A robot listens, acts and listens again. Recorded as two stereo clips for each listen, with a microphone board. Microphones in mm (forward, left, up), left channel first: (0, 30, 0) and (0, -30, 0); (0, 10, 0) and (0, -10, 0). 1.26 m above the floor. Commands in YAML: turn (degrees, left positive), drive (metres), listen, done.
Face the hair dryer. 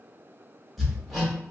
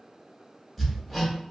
listen: true
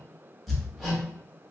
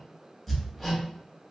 listen: true
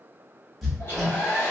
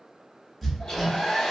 turn: 35
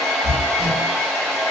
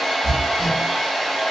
turn: 10
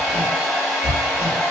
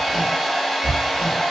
done: "Found it: a hair dryer, straight ahead."